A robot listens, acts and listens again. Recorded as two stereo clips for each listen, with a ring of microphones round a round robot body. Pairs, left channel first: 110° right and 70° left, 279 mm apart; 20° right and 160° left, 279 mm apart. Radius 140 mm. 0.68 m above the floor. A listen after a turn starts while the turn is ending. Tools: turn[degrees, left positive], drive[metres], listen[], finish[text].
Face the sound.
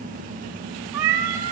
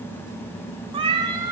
Thought: The cat meowing: 80° left.
Action: turn[80]
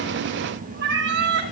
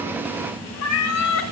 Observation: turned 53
Thought: The cat meowing is now 10° left.
Action: turn[10]
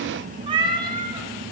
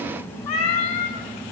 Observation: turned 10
Thought: The cat meowing is now 10° right.
Action: turn[-10]
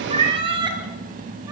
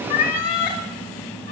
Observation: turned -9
Action: finish[Found it: a cat meowing, straight ahead, 2 to 4 m away.]